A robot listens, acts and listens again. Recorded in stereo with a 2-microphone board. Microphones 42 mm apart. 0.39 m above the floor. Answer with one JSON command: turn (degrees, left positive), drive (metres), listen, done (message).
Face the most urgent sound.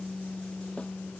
{"listen": true}
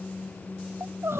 {"turn": -90}
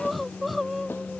{"done": "Found it: crying, straight ahead."}